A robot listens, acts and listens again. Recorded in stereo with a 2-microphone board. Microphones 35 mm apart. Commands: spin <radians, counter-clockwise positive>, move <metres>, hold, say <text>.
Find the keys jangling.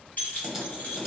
spin 0.87
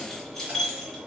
say Found it: keys jangling, straight ahead.